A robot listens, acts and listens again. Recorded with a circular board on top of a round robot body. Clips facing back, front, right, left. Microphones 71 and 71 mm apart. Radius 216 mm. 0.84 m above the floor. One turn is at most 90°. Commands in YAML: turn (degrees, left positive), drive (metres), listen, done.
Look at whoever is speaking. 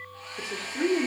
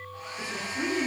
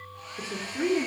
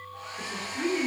turn: -90
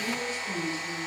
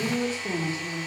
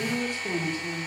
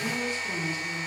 turn: -60
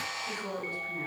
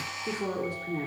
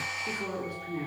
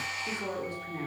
turn: -10
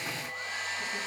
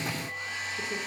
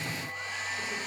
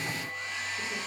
listen: true
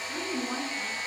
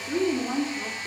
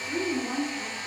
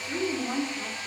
done: "Facing the woman speaking, 2 to 4 m away."